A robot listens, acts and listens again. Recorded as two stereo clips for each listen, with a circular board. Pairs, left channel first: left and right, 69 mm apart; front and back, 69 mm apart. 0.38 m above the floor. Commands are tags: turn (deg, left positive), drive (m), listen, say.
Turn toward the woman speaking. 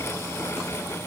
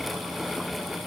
<listen/>
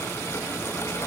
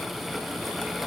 <listen/>
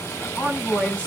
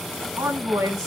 <turn deg="155"/>
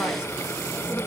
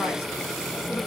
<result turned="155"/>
<listen/>
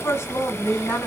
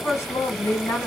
<turn deg="50"/>
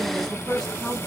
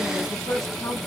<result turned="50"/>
<say>Found it: a woman speaking, straight ahead.</say>